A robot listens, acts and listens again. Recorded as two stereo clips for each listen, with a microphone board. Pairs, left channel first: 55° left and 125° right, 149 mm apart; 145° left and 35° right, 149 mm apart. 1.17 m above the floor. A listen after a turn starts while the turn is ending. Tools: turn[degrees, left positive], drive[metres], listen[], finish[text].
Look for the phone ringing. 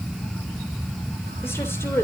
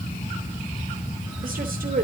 Action: listen[]
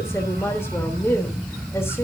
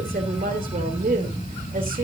Action: listen[]
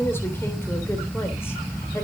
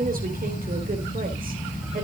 Action: finish[I can't make out a phone ringing to turn to.]